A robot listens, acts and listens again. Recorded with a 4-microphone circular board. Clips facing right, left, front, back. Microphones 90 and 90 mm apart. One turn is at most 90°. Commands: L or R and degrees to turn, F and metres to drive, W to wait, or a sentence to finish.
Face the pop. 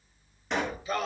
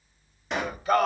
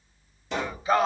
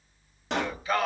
L90
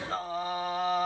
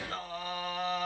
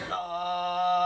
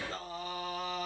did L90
L90
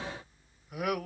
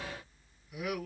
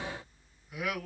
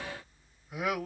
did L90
Facing where the pop came from. I can't hear it now.